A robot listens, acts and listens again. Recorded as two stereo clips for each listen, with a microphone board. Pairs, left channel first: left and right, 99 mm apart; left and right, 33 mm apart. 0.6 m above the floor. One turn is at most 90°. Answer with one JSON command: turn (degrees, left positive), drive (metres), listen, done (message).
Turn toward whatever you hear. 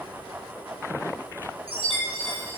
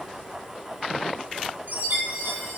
{"turn": -70}
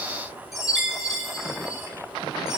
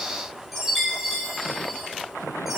{"done": "Found it: a chime, straight ahead."}